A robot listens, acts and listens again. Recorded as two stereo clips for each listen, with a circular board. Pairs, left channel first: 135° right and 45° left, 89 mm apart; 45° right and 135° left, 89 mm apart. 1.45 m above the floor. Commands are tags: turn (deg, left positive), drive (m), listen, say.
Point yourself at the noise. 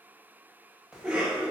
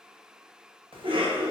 <turn deg="125"/>
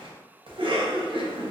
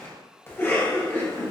<turn deg="20"/>
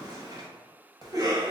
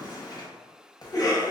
<say>Found it: a cough, straight ahead, 1 to 2 m away.</say>